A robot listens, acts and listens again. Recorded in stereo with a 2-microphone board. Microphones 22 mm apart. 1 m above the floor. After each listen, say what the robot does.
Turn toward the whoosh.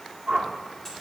Turn 55° right.
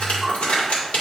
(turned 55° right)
Found it: a whoosh, straight ahead, 1 to 2 m away.